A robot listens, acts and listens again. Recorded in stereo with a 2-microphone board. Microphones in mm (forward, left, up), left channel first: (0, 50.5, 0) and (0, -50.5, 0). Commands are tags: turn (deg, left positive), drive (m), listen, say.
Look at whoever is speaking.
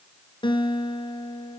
<listen/>
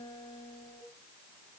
<listen/>
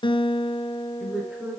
<turn deg="-30"/>
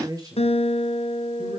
<turn deg="-145"/>
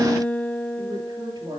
<turn deg="-45"/>
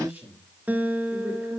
<turn deg="-20"/>
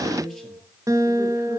<say>Found it: a man speaking, straight ahead, over 4 m away.</say>